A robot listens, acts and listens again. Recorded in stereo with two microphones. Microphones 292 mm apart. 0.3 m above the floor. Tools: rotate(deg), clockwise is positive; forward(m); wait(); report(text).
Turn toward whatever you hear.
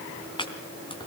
rotate(-15)
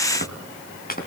rotate(-150)
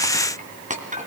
rotate(30)
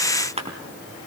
rotate(25)
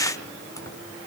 wait()
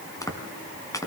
rotate(-10)
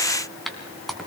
report("Found it: chopping, straight ahead, 2 to 4 m away.")